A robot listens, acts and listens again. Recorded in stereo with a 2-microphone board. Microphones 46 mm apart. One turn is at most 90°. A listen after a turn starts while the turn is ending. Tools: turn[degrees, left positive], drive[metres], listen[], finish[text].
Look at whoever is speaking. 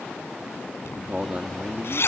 Thought: The man speaking: about 30° right or 150° right.
Action: turn[-30]
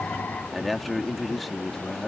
Action: finish[Found it: a man speaking, straight ahead.]